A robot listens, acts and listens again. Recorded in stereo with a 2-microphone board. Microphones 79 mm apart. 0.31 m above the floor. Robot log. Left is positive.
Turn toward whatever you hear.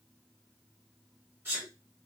note: The sneeze: about 30° right or 150° right.
cmd yaw -30
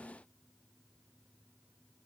cmd idle
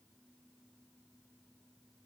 end: I heard a sneeze, but can't make it out now. It was about straight ahead or 120° right.